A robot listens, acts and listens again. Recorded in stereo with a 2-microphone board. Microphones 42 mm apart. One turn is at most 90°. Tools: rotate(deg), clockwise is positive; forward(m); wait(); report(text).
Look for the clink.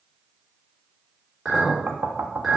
rotate(30)
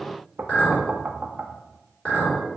rotate(-25)
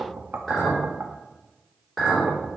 report("Facing the clink.")